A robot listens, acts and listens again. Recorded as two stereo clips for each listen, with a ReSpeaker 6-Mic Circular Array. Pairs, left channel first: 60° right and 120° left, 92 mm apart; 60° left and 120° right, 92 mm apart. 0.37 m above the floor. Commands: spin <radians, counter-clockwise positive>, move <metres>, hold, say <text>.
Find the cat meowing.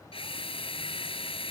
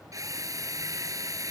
hold
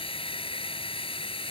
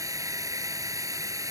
hold
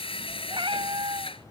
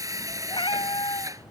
spin 1.57
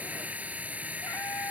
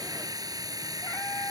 hold
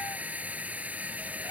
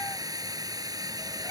hold
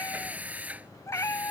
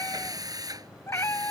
say Facing the cat meowing.